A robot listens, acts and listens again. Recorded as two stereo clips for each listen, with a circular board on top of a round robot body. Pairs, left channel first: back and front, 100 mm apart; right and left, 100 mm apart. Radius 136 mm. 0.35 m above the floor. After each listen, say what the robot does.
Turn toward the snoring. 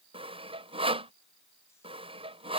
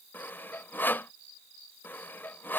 Keep listening.
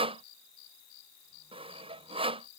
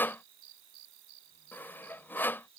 Keep listening.
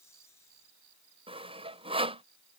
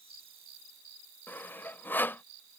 I can't make out snoring to turn to.